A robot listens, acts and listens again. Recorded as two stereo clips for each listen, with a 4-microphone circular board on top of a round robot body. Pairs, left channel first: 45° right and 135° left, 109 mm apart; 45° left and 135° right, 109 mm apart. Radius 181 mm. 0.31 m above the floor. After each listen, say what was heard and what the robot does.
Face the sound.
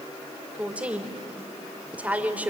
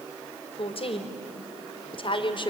The woman speaking: 60° left. Turn 60° left.
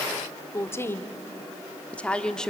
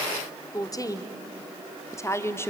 The woman speaking is now 35° left. Turn 35° left.
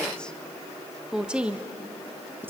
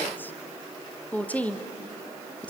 The woman speaking is now 100° left. Turn 100° left.
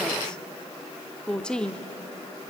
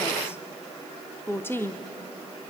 The woman speaking is now 25° left. Turn 25° left.
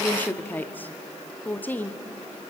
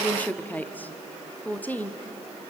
Found it: a woman speaking, straight ahead.